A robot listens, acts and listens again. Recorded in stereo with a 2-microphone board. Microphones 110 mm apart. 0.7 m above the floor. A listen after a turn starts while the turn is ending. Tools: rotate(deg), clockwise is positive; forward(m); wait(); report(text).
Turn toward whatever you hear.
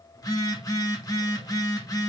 rotate(-35)
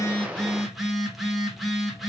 report("Found it: a phone buzzing, straight ahead, 1 to 2 m away.")